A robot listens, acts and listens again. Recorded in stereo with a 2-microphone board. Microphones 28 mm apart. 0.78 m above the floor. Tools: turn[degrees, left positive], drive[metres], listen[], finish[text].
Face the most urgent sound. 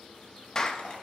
Action: listen[]
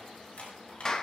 Action: listen[]
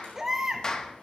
Thought: The baby crying: about 20° right or 160° right.
Action: turn[-20]
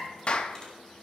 Action: listen[]
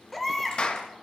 Action: finish[Found it: a baby crying, straight ahead, 1 to 2 m away.]